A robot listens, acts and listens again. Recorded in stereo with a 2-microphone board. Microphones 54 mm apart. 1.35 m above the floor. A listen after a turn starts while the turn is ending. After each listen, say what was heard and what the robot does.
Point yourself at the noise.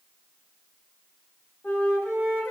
The flute: about 35° left or 145° left. Turn 35° left.
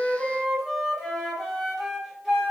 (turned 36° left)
Found it: a flute, straight ahead, under 1 m away.